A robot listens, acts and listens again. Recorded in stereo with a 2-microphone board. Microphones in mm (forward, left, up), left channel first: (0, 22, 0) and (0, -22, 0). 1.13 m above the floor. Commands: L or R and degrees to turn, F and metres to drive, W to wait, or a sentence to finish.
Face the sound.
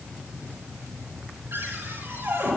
R60
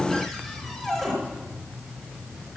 Facing the cupboard door, over 4 m away.